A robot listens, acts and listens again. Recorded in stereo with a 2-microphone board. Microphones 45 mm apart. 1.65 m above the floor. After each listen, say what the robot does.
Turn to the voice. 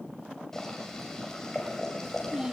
Turn 15° right.
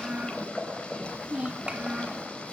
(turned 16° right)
Turn 150° right.
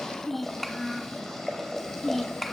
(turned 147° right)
Facing the child speaking, 1 to 2 m away.